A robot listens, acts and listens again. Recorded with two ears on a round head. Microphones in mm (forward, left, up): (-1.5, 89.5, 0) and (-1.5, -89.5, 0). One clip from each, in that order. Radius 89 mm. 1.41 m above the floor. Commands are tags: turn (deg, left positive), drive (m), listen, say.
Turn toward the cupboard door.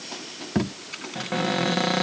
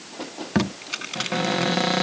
<turn deg="-30"/>
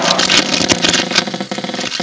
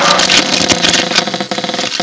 <turn deg="-145"/>
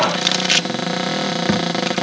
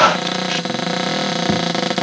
<say>Found it: a cupboard door, straight ahead.</say>